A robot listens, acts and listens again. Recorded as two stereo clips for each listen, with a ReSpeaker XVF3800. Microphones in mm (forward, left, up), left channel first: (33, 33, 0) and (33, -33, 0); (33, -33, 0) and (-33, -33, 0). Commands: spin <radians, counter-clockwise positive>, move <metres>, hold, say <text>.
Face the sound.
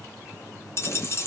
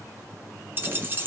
spin 2.27
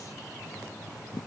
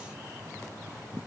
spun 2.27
say I heard a dropped coin from this way, but can't make it out now.